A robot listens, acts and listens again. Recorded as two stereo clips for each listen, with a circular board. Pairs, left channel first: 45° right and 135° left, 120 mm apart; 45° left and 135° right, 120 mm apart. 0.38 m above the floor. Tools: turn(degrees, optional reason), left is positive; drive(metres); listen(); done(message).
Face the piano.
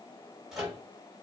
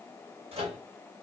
listen()
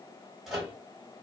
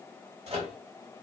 listen()
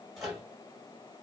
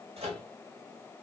done("I can't make out a piano, only a microwave.")